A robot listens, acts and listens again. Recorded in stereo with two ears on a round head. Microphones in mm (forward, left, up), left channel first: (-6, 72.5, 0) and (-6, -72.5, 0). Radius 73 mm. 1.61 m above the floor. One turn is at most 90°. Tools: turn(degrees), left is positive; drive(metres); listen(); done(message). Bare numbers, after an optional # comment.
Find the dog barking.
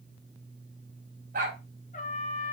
# The dog barking: about 60° right or 120° right.
turn(-60)
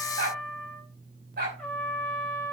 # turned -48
# So it is at 70° right.
turn(-70)
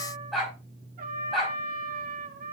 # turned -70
done("Found it: a dog barking, straight ahead, over 4 m away.")